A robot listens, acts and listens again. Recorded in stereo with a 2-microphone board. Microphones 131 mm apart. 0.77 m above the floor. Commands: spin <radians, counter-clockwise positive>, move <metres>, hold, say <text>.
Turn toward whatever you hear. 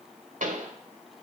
spin -1.57
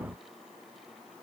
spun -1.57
say I heard a pop from this way, but can't make it out now.